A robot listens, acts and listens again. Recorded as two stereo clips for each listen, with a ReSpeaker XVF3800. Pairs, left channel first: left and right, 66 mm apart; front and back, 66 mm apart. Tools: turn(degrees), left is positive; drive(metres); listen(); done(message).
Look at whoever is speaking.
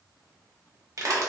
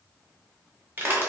listen()
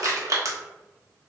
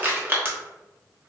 listen()
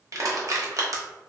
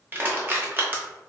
done("I can't make out anyone speaking, only crushing.")